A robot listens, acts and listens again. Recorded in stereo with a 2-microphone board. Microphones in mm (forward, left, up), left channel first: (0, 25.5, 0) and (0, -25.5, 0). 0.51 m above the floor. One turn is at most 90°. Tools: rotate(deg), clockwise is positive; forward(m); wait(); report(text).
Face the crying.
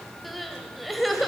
rotate(-30)
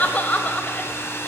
rotate(-90)
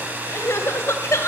rotate(-65)
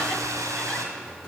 wait()
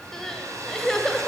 rotate(-10)
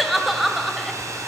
report("Facing the crying.")